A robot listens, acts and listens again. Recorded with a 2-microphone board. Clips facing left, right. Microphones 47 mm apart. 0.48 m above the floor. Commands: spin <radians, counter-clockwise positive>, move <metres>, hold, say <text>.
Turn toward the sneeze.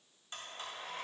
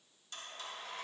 hold
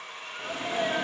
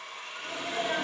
spin 0.70
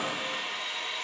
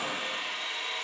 spin 1.66
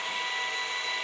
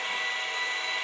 say Facing where the sneeze came from. I can't hear it now.